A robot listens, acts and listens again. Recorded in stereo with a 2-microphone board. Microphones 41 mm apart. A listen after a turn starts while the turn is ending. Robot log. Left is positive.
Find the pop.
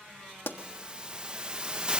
note: The pop: about 65° left or 115° left.
cmd yaw +65
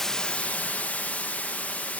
cmd idle
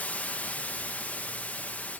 end: I heard a pop, but can't make it out now. It was about straight ahead or 50° left.